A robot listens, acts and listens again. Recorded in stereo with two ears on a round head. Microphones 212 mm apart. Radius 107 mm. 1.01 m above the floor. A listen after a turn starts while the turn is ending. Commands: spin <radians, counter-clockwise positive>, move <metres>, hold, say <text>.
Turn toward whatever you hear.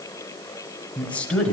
spin 0.52
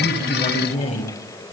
spin 2.62
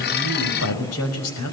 spin 1.22
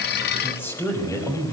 spin 0.17
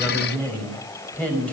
say Facing the woman speaking, over 4 m away.